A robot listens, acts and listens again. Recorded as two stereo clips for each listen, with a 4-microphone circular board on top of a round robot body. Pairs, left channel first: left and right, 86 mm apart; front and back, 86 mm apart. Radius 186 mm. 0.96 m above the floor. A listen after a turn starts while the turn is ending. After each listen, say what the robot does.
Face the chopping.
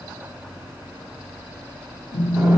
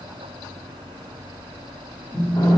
Keep listening.
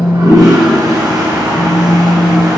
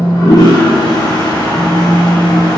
Keep listening.
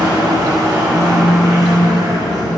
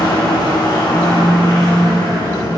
I can't make out chopping to turn to.